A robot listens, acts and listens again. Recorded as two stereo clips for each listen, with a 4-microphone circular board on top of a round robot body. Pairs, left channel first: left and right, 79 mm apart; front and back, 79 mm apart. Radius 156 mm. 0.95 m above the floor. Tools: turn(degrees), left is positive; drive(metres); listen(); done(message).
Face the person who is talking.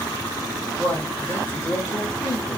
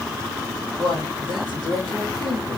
turn(degrees=20)
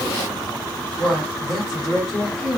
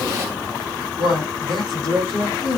done("Facing the man speaking, 2 to 4 m away.")